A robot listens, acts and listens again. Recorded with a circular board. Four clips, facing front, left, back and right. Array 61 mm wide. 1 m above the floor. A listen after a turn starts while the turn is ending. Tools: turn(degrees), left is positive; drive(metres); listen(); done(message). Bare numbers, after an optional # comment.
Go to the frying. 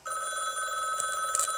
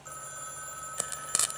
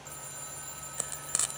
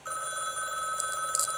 # The frying: 105° left.
turn(105)
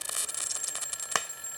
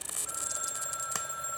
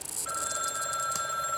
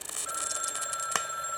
# The frying is now 30° right.
turn(-30)
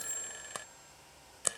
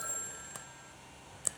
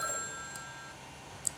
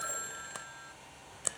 # The frying is now 15° right.
turn(-15)
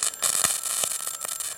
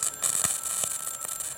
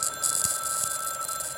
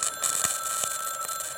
drive(1.0)
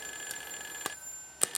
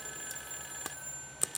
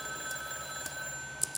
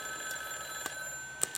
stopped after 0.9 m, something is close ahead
done("I am next to the frying.")